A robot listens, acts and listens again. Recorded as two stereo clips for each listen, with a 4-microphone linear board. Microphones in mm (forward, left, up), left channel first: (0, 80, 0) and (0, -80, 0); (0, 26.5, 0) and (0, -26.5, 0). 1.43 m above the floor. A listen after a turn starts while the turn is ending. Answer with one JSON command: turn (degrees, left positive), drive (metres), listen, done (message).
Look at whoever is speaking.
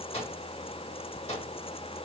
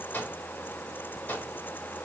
{"listen": true}
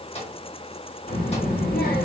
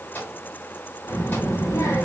{"turn": 90}
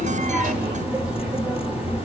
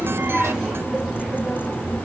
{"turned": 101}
{"turn": -10}
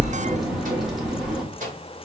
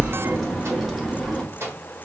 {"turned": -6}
{"done": "Facing the child speaking, 1 to 2 m away."}